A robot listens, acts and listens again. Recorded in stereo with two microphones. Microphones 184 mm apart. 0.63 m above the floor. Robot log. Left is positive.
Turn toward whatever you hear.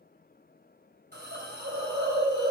note: The hiss: about 65° right or 115° right.
cmd yaw -65
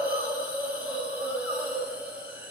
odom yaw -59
note: So it is at 10° right.
cmd yaw -10
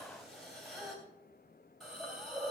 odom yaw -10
end: Found it: a hiss, straight ahead.